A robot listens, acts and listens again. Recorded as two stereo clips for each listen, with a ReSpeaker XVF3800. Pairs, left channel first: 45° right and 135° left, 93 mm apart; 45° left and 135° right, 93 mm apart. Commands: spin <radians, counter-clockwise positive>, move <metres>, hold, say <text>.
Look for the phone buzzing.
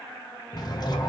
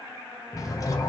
spin -0.87
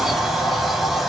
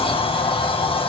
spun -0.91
hold
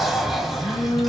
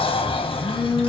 say Found it: a phone buzzing, straight ahead, under 1 m away.